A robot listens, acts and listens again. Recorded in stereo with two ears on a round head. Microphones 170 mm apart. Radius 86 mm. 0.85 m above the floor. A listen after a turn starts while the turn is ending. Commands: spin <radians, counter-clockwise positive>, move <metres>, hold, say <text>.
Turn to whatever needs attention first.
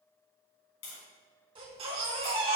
spin -0.52
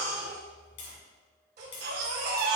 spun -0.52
spin -2.09
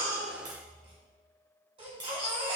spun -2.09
spin -0.52
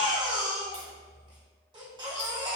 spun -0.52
spin -0.44
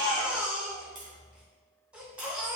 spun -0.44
say Found it: a baby crying, straight ahead.